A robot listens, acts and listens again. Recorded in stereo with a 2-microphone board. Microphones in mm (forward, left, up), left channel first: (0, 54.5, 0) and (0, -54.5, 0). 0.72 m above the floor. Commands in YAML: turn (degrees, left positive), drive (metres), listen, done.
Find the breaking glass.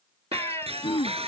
turn: -65
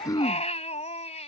listen: true
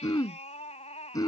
done: "I heard breaking glass, but can't make it out now. It was about straight ahead or 50° right."